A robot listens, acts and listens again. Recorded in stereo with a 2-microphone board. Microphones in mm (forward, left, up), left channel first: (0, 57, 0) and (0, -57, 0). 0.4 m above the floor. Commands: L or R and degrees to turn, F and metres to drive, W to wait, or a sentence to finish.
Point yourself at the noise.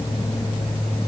W
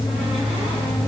W
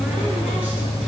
I can't make out anything to turn to.